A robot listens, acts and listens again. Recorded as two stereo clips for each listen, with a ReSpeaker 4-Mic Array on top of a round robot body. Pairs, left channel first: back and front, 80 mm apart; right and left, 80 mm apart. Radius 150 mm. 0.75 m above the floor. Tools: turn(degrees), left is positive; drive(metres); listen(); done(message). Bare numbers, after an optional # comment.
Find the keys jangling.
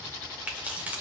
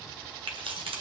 # The keys jangling: 75° left.
turn(75)
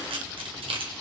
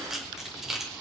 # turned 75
done("Facing the keys jangling, 1 to 2 m away.")